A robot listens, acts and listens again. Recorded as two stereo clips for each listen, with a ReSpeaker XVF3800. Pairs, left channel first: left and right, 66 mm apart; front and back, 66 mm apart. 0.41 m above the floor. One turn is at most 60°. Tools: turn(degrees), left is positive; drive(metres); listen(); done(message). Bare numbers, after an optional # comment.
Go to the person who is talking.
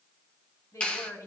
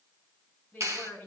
# The woman speaking: 60° left.
turn(60)
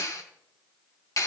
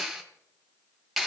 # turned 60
listen()
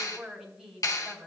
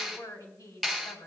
# The woman speaking is now 10° right.
turn(-10)
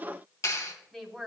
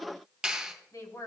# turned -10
drive(1.0)
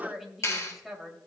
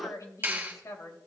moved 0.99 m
drive(1.0)
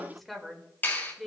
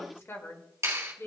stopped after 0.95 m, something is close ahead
done("I am next to the woman speaking.")